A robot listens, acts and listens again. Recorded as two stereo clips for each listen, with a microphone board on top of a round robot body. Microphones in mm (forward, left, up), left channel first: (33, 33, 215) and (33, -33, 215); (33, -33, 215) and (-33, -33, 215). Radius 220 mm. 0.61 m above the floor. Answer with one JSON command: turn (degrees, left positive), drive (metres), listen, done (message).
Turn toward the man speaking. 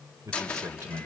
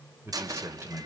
{"turn": -130}
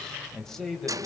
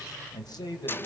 {"done": "Found it: a man speaking, straight ahead, over 4 m away."}